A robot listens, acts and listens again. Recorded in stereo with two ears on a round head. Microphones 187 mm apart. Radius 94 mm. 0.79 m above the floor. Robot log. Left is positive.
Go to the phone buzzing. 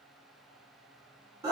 cmd idle
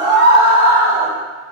cmd idle
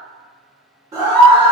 end: I can't make out a phone buzzing, only a scream.